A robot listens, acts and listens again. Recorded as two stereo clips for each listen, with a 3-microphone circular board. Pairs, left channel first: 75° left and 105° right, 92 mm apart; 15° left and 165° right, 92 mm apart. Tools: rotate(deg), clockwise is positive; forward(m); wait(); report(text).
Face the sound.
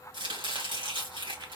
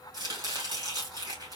rotate(125)
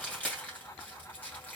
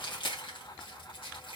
report("Found it: chopping, straight ahead, 2 to 4 m away.")